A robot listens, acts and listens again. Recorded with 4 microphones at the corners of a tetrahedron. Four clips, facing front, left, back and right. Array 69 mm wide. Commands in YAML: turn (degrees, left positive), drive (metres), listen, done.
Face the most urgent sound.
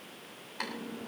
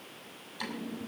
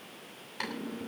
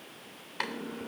listen: true
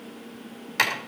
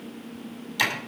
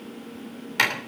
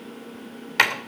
listen: true
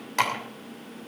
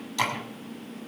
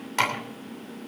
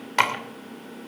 done: "I can't make out anything urgent to turn to."